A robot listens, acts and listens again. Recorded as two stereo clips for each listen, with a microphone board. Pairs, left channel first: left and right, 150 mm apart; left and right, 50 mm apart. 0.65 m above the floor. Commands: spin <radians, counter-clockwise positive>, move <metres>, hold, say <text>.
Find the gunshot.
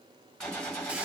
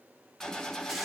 spin 0.52
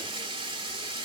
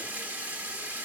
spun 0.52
hold
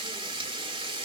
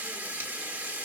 say I heard a gunshot, but can't make it out now. It was about 25° right or 145° left.